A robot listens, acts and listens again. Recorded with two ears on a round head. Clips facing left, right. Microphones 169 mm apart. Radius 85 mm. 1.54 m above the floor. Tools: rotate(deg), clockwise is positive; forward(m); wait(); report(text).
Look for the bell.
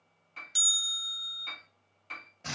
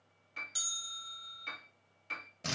rotate(-30)
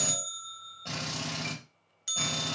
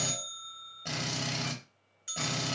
rotate(-120)
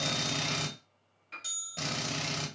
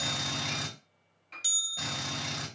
rotate(40)
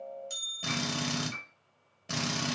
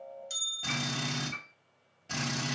report("Found it: a bell, straight ahead, under 1 m away.")